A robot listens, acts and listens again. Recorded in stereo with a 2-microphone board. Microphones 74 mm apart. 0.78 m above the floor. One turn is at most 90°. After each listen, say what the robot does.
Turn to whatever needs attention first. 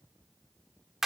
Keep listening.
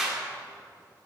Keep listening.
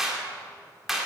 I can't make out anything urgent, only a clap.